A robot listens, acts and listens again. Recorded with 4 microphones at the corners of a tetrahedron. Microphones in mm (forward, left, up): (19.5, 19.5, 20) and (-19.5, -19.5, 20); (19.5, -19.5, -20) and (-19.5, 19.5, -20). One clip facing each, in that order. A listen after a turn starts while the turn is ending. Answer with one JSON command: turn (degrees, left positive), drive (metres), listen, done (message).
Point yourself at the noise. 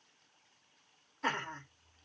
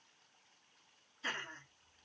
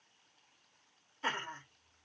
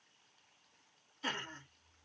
{"turn": 15}
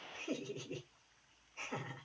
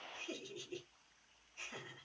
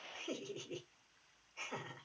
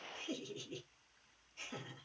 {"done": "Found it: laughter, straight ahead, 1 to 2 m away."}